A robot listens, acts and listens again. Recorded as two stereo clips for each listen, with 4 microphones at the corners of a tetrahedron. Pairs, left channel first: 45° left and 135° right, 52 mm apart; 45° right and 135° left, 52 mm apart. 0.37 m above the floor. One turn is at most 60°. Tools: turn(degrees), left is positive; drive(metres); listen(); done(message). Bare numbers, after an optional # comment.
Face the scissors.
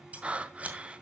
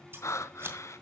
# The scissors: 165° left.
turn(60)
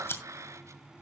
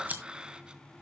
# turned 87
# The scissors is now 80° left.
turn(60)
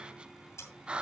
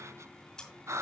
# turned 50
# Nothing new. It was at 30° left.
turn(30)
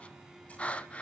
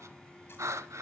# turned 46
# Nothing new. It was at 20° right.
turn(-20)
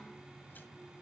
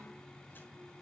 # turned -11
done("Facing where the scissors came from. I can't hear it now.")